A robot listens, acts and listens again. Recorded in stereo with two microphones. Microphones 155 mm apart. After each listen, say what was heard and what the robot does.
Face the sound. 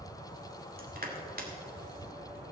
The crushing: about 70° right or 110° right. Turn 70° right.
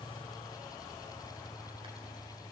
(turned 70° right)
Keep listening.
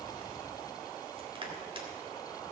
So it is at 35° right. Turn 35° right.
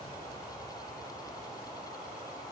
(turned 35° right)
Keep listening.
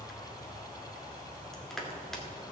Found it: crushing, straight ahead, 2 to 4 m away.